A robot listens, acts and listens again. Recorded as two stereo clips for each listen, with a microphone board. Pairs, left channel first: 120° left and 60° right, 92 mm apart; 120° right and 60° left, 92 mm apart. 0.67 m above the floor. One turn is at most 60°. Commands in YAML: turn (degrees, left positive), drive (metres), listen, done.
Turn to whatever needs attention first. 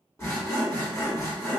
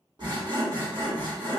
listen: true
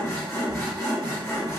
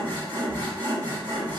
listen: true
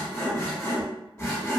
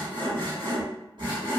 done: "I can't make out anything urgent, only sawing."